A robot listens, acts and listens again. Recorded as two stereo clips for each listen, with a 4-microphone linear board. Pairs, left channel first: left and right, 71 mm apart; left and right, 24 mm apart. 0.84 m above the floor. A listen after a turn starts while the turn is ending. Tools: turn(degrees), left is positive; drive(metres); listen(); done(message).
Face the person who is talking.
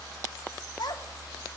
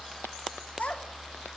turn(degrees=90)
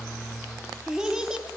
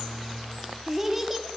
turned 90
turn(degrees=-10)
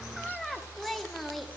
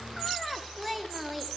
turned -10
done("Facing the child speaking, 1 to 2 m away.")